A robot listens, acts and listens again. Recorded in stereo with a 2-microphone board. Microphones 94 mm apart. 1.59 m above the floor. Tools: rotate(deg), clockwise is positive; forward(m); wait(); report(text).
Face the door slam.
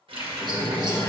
rotate(-40)
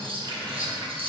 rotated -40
wait()
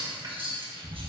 report("I heard a door slam, but can't make it out now. It was about straight ahead or 100° left.")